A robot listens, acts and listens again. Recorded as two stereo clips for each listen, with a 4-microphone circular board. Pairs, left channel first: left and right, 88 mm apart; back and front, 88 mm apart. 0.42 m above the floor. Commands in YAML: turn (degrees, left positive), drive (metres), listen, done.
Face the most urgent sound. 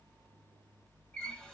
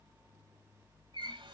listen: true
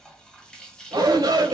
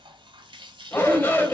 turn: -115
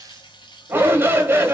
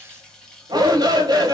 turn: -30
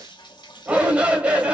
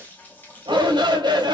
turn: -15
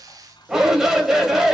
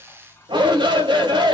done: "Facing the shout, 1 to 2 m away."